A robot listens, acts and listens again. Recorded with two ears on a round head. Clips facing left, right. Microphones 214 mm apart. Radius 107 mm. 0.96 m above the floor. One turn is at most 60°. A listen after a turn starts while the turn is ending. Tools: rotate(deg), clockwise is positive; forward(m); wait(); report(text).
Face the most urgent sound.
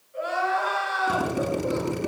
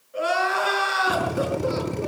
rotate(60)
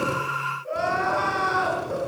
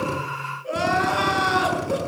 rotate(50)
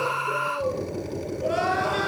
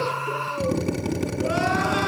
wait()
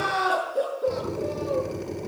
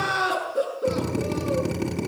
rotate(10)
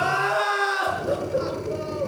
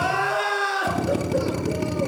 report("Found it: crying, straight ahead, over 4 m away.")